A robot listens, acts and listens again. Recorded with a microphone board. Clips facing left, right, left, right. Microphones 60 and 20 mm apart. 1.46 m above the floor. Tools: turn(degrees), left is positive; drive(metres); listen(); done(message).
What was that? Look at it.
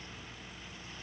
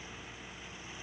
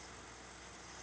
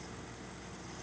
listen()
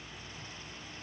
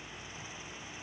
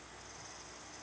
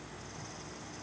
listen()
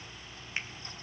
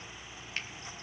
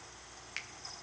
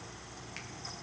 turn(degrees=20)
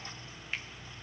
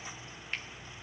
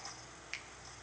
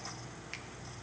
done("Facing the finger snap, under 1 m away.")